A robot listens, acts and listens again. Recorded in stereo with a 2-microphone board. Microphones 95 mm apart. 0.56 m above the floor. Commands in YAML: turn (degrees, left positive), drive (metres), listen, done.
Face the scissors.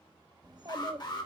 listen: true
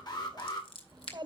turn: 60
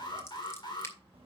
listen: true
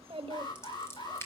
turn: 30
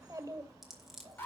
done: "Found it: scissors, straight ahead."